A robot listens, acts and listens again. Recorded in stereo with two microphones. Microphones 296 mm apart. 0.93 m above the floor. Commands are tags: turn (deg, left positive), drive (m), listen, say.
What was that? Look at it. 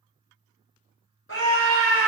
<turn deg="45"/>
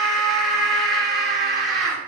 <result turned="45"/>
<say>Facing the scream.</say>